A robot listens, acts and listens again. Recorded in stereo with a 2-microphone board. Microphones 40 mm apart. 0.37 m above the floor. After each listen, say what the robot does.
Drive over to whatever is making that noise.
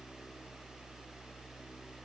Keep listening.
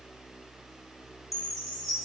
Turn 30° left.
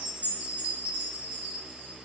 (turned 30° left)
Turn 30° right.
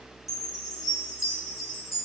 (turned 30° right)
Turn 10° right.
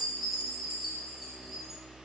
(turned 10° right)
Drive 1.0 m forward.
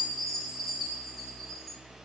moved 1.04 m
Drive 1.0 m forward.
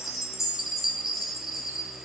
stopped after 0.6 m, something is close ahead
I am next to the chime.